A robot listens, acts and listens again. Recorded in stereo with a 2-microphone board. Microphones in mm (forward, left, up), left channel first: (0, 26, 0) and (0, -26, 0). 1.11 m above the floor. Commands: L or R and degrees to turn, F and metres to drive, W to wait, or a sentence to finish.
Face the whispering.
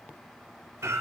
W
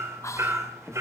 L90
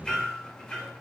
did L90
W
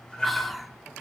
Found it: whispering, straight ahead.